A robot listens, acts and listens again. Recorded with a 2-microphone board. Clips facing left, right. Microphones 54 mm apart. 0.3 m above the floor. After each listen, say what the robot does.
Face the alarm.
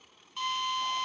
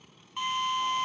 Keep listening.
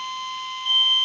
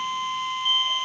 Turn 60° right.
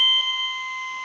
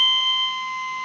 Turn 10° right.
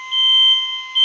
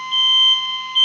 Facing the alarm.